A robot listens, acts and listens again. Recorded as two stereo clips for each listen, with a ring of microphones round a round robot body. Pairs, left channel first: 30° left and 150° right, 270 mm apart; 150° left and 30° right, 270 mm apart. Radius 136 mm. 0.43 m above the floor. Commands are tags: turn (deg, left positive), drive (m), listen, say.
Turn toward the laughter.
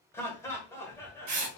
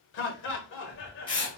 <turn deg="110"/>
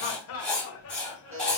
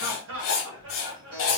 <say>Found it: laughter, straight ahead.</say>